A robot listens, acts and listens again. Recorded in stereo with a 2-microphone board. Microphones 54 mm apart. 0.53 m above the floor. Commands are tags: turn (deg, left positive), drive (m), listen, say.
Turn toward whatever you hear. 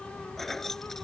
<turn deg="30"/>
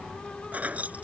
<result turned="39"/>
<turn deg="-25"/>
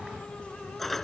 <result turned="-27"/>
<say>Facing the keys jangling.</say>